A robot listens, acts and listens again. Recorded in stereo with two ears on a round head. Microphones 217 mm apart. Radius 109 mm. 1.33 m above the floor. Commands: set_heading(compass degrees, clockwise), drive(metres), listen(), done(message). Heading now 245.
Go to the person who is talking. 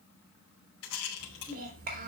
set_heading(280)
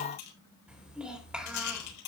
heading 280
drive(1.0)
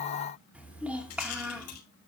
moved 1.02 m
drive(1.0)
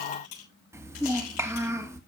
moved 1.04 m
set_heading(290)
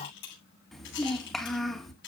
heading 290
drive(1.0)
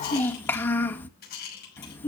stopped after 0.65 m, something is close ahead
set_heading(280)
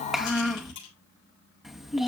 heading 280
done("I am next to the child speaking.")